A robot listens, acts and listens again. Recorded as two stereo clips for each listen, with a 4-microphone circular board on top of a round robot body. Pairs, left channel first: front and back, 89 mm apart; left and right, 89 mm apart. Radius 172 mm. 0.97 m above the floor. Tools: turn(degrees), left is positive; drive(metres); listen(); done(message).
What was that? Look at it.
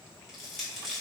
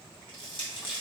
turn(degrees=90)
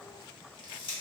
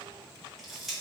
done("Facing the crushing, 1 to 2 m away.")